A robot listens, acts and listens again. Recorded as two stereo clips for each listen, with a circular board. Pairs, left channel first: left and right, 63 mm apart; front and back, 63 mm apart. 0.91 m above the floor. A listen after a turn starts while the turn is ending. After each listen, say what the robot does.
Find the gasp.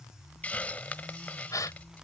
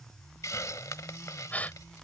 Turn 65° left.
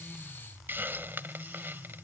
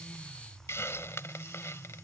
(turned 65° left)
I heard a gasp from this way, but can't make it out now.